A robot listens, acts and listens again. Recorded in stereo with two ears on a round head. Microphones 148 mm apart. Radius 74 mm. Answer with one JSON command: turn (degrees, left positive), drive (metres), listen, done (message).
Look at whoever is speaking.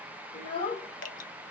{"turn": 30}
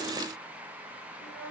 {"done": "Found it: a child speaking, straight ahead."}